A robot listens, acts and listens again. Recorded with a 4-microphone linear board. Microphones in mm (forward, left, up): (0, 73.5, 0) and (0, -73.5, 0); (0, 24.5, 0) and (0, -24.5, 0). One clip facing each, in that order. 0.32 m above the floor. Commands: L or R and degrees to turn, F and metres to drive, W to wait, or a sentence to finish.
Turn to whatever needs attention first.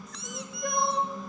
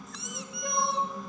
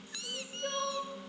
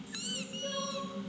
L45
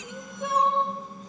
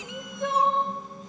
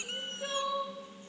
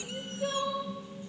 Facing the crying, over 4 m away.